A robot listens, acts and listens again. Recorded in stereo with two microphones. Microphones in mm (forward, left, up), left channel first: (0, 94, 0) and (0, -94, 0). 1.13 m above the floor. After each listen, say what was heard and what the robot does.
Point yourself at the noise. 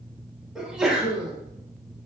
Turn 30° right.
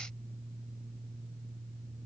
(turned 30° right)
Keep listening.
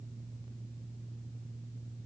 I heard a sneeze, but can't make it out now. It was about 25° left or 145° right.